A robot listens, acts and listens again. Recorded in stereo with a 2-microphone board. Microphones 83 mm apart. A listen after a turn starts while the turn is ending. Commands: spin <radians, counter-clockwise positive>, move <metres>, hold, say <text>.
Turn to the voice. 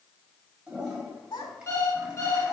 spin 1.13
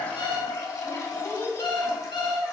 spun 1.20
spin 0.61
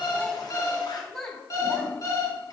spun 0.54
say Facing the child speaking, 2 to 4 m away.